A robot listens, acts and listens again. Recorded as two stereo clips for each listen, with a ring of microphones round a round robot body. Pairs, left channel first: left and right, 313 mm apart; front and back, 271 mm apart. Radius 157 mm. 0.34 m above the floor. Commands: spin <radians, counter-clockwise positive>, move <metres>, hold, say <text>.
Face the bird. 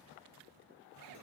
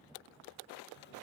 hold
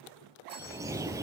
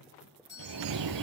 spin -2.97
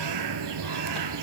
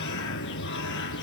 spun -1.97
spin -0.96
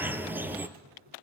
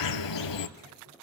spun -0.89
say Facing the bird.